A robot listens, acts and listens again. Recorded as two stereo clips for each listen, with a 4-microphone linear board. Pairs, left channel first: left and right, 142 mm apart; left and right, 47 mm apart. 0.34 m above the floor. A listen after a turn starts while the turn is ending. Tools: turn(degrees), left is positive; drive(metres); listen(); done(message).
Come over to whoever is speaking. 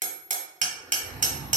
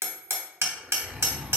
listen()
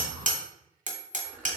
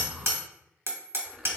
listen()
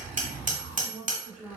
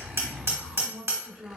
turn(degrees=-20)
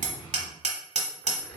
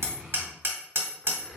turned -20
listen()
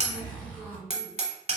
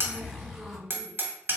listen()
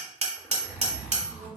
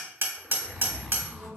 done("I heard a woman speaking, but can't make it out now. It was about straight ahead or 140° right. I did not reach it.")